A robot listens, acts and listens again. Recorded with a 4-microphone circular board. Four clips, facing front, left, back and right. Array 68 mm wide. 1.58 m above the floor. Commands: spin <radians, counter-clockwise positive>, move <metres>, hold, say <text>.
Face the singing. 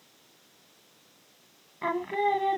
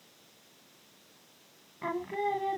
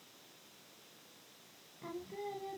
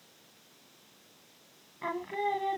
say Found it: singing, straight ahead.